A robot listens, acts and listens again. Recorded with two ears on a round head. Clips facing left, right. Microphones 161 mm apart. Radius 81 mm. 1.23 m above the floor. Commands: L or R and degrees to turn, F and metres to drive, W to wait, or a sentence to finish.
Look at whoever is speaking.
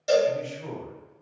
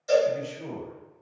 R15
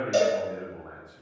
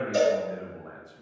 R150
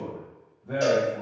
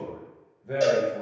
R15
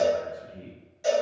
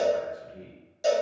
Facing the man speaking.